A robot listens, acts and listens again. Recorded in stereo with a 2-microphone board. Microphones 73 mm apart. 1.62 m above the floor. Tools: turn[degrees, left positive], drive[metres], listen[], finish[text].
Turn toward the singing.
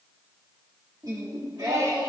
Thought: The singing: about 55° right or 125° right.
Action: turn[-55]
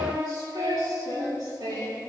Thought: So it is at 80° right.
Action: turn[-80]
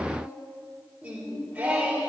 Thought: The singing is now 20° right.
Action: turn[-20]
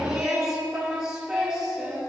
Thought: The singing is now 10° right.
Action: turn[-10]
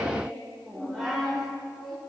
Action: finish[Facing the singing.]